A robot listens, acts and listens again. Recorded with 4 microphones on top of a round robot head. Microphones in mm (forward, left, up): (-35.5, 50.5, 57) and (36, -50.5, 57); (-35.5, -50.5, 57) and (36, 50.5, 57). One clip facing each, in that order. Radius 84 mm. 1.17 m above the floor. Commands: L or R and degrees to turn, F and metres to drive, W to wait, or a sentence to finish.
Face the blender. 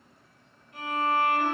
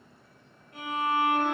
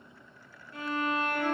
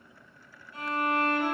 W
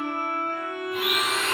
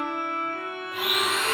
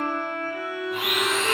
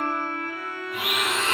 R170
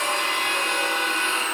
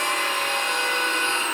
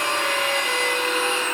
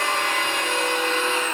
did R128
R40
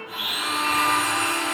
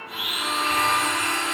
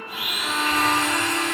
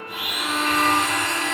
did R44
Facing the blender.